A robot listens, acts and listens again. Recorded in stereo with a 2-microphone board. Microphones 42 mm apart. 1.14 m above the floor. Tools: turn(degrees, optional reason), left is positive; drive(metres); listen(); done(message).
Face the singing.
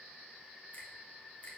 listen()
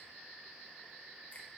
listen()
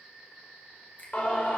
turn(degrees=35, reason="The singing: about 35° left or 145° left.")
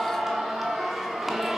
turn(degrees=-10, reason="So it is at 10° right.")
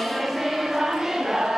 turn(degrees=-10, reason="The singing is now 10° right.")
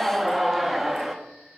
done("Found it: singing, straight ahead.")